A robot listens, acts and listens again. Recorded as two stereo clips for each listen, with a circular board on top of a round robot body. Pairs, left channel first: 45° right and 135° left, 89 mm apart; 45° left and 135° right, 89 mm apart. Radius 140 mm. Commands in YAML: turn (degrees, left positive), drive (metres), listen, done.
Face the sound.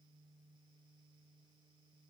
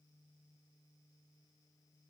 listen: true
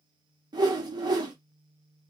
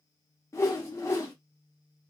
turn: 100
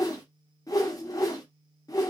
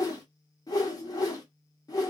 done: "Found it: a whoosh, straight ahead."